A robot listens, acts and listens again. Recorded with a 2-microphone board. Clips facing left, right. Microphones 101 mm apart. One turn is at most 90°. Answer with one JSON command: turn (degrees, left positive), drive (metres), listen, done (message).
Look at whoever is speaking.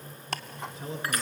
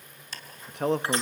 {"turn": -60}
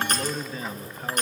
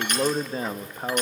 {"turn": -40}
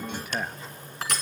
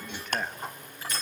{"turn": 10}
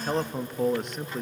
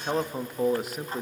{"done": "Facing the man speaking."}